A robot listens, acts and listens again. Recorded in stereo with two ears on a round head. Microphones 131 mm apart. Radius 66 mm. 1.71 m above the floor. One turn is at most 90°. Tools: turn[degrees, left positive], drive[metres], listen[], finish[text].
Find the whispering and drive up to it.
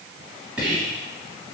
Action: turn[-30]
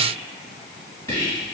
Thought: So it is at 20° left.
Action: turn[20]
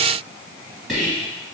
Action: drive[1.0]
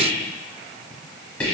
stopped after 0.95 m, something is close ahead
Thought: The whispering is now 10° left.
Action: turn[10]
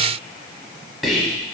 Action: finish[I am next to the whispering.]